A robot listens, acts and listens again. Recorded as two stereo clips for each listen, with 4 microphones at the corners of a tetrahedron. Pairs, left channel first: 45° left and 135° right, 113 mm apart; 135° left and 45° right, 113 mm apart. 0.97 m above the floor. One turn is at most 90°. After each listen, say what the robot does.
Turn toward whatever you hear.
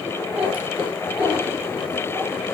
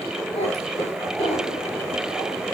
Turn 90° left.
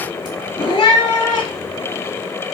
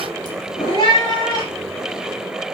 Turn 85° left.
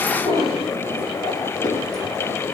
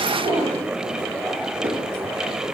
Facing the cat meowing.